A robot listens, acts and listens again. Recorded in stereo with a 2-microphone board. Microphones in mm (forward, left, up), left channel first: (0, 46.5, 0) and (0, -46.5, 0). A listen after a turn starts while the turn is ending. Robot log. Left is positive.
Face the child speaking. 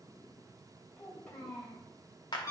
note: The child speaking: about 20° left or 160° left.
cmd yaw +20
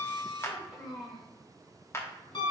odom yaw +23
end: Found it: a child speaking, straight ahead.